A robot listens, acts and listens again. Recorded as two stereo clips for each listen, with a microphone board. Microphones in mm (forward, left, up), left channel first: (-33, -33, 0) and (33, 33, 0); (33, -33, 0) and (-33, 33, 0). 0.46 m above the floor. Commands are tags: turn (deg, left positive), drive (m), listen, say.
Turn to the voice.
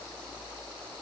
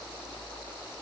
<listen/>
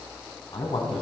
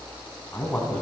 <turn deg="-120"/>
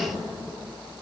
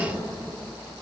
<turn deg="-20"/>
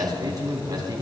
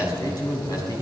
<say>Found it: a man speaking, straight ahead.</say>